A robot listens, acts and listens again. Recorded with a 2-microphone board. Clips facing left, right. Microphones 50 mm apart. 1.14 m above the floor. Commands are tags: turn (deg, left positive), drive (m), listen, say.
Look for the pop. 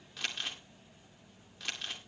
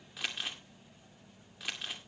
<listen/>
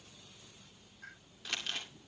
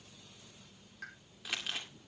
<turn deg="-75"/>
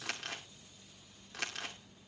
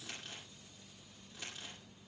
<listen/>
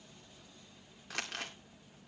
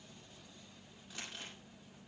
<say>I heard a pop, but can't make it out now. It was about straight ahead or 30° right.</say>